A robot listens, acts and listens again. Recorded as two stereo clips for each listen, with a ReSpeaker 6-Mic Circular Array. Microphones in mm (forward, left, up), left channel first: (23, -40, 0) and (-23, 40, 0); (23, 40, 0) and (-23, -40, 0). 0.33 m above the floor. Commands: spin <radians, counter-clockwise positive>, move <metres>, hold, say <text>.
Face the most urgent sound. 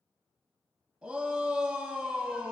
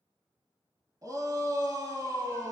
spin -2.79
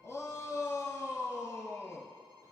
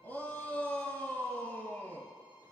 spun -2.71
say Found it: a shout, straight ahead.